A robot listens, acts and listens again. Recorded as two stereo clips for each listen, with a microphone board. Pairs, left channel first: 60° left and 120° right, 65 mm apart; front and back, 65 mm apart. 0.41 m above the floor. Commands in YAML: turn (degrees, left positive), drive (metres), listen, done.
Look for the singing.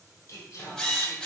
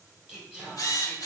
turn: 100
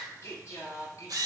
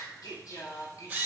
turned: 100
turn: 30
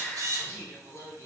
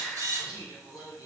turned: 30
turn: 25
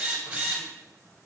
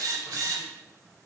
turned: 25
listen: true
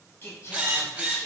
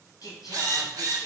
turn: 10
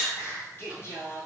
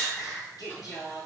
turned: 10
done: "Facing the singing, 1 to 2 m away."